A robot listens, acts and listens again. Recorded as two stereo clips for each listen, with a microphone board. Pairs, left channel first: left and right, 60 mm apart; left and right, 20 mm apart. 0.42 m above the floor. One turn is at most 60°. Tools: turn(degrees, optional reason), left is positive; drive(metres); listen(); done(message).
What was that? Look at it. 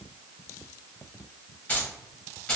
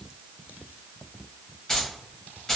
turn(degrees=15, reason="The keys jangling: about 15° left or 165° left.")
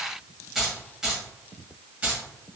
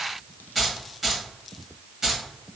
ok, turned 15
turn(degrees=-25, reason="So it is at 25° right.")
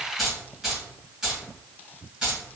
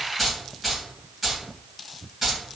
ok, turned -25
turn(degrees=-15, reason="The keys jangling is now 15° right.")
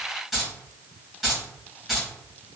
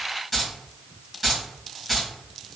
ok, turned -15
done("Found it: keys jangling, straight ahead.")